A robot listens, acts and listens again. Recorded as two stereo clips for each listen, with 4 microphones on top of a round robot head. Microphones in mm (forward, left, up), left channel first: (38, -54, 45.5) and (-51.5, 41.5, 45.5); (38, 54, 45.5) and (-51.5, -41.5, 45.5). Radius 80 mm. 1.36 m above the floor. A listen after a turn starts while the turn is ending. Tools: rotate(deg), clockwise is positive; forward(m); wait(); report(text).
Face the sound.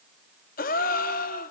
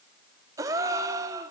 rotate(65)
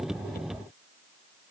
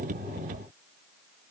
report("I heard a gasp from this way, but can't make it out now.")